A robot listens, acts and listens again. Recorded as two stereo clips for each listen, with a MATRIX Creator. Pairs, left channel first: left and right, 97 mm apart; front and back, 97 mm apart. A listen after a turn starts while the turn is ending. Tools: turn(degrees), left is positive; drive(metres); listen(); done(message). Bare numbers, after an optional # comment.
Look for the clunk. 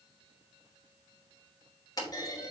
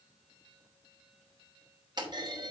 # The clunk: 140° left.
turn(140)
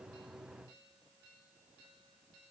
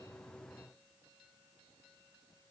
done("Facing where the clunk came from. I can't hear it now.")